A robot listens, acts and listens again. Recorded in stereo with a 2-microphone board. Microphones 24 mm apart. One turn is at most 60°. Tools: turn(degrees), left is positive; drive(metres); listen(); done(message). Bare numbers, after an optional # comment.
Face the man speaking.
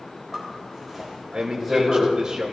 # The man speaking: about 35° right or 145° right.
turn(-35)
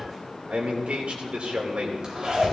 # So it is at 105° right.
turn(-60)
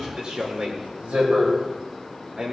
# The man speaking is now 45° right.
turn(-45)
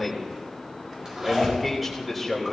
done("Facing the man speaking.")